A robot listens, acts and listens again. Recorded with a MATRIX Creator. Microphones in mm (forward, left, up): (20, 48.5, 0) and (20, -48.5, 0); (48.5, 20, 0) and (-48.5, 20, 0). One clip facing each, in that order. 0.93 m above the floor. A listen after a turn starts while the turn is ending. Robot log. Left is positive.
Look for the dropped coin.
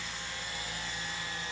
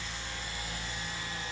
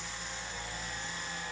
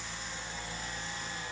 cmd idle
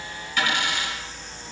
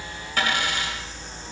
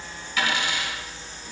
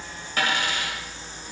note: The dropped coin: 135° right.
cmd yaw -135
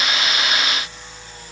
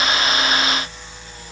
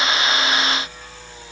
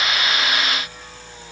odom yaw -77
note: Nothing new. It was at 55° right.
cmd yaw -55
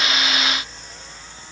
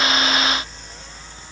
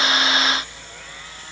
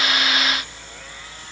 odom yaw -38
note: Nothing new. It was at 20° right.
cmd yaw -20
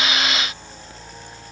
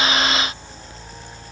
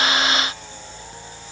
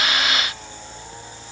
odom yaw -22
end: I heard a dropped coin from this way, but can't make it out now.